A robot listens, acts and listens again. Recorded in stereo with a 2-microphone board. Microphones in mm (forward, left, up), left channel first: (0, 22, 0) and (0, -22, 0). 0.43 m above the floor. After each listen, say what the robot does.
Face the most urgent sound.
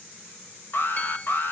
Turn 55° left.
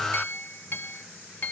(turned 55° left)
Facing the alarm, 1 to 2 m away.